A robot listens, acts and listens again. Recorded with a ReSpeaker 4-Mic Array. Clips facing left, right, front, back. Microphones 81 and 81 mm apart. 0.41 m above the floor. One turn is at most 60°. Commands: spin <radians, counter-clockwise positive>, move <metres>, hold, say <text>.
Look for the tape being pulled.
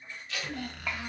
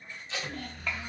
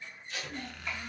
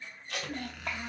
spin -1.05
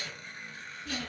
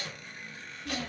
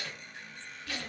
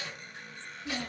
spin -1.05
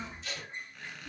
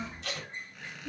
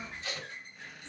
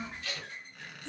spin -1.05
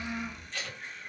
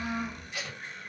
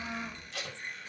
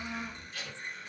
spin -0.26
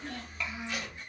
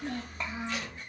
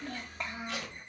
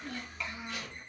hold
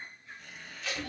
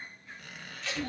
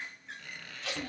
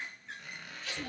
say Found it: tape being pulled, straight ahead.